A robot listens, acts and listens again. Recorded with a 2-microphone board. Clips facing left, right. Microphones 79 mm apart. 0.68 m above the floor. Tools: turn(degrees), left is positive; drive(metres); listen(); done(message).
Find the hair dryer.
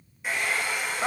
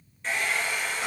turn(degrees=30)
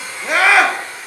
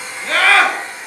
turn(degrees=-20)
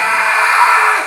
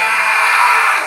listen()
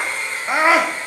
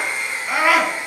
turn(degrees=-15)
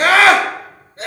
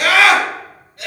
listen()
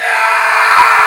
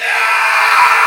listen()
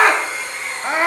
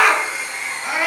done("Found it: a hair dryer, straight ahead.")